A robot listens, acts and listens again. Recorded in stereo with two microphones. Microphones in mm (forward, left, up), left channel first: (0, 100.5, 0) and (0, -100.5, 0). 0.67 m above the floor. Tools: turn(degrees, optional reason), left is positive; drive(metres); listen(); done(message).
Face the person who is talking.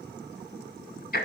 listen()
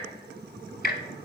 listen()
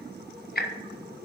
done("I can't make out anyone speaking to turn to.")